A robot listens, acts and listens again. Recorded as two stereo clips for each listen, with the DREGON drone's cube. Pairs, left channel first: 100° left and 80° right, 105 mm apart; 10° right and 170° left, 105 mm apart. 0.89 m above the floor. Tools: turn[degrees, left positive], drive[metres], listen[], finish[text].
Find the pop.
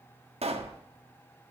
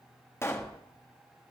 Thought: The pop: 75° right.
Action: turn[-75]
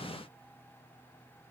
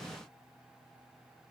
Action: finish[Facing where the pop came from. I can't hear it now.]